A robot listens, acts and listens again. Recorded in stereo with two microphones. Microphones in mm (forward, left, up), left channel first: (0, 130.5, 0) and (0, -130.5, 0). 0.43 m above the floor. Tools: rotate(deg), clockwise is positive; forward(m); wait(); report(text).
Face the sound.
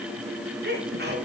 rotate(40)
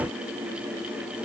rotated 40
wait()
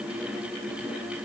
report("I heard a sneeze, but can't make it out now. It was about straight ahead or 100° right.")